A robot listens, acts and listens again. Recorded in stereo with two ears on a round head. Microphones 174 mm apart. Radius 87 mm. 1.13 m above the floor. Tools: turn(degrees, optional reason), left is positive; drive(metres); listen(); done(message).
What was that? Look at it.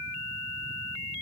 listen()
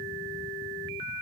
listen()
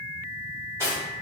turn(degrees=-30)
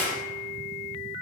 turn(degrees=15, reason="So it is at 15° left.")
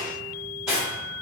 done("Facing the cutlery clinking, 1 to 2 m away.")